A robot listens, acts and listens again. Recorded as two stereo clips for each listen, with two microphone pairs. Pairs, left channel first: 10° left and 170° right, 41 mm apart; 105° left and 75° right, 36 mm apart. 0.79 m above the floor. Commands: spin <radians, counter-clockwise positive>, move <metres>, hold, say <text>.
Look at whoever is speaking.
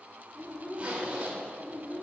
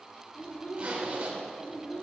spin 1.22
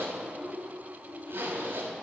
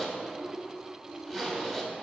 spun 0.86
spin 0.52
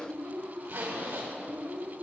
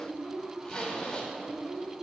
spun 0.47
spin 0.17
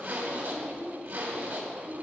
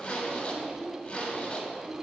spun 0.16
say Facing the child speaking.